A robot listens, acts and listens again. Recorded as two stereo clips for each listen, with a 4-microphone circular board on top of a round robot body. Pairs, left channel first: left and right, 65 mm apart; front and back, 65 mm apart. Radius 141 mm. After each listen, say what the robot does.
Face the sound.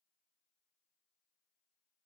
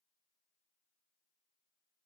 Keep listening.
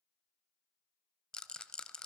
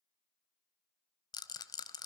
Turn 10° left.
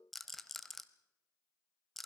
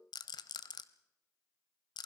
Found it: a rattle, straight ahead, under 1 m away.